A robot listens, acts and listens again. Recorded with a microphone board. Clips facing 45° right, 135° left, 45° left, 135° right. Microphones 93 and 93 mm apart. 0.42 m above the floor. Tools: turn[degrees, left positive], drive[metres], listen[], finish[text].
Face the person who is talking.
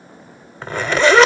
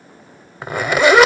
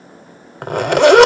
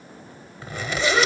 Action: listen[]
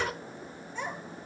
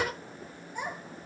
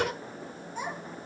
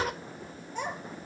Thought: The child speaking: 150° right.
Action: turn[-150]
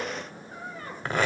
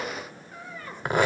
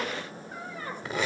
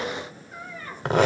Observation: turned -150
Action: finish[Found it: a child speaking, straight ahead, over 4 m away.]